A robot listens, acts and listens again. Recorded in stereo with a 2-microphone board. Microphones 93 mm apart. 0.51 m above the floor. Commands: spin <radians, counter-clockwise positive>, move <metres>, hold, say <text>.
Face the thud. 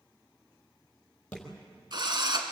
spin 0.52
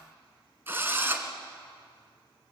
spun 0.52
hold
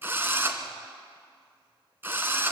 say I heard a thud, but can't make it out now. It was about 20° right or 140° left.